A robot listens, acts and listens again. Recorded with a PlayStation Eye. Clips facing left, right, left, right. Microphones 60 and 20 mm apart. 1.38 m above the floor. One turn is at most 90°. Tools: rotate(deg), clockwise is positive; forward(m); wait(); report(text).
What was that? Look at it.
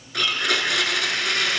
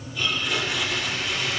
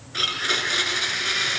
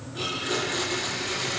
rotate(-90)
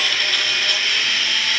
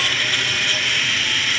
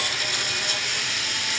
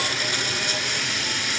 report("Found it: a blender, straight ahead.")